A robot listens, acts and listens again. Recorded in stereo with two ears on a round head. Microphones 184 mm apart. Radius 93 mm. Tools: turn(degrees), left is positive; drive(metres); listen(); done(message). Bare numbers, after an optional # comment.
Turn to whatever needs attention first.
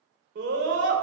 # The scream: about 60° right or 120° right.
turn(-60)
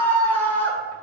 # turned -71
# So it is at 10° left.
turn(10)
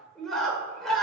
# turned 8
done("Found it: a scream, straight ahead, 2 to 4 m away.")